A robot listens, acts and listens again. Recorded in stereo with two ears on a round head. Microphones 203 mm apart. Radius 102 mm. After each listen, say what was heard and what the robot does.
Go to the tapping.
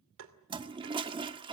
The tapping: about 60° right or 120° right. Turn 60° right.
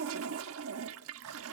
Keep listening.
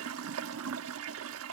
Keep listening.
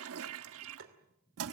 So it is at 60° right. Turn 60° right.
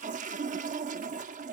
Keep listening.
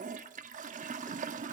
Keep listening.
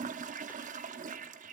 I heard tapping from this way, but can't make it out now. I did not reach it.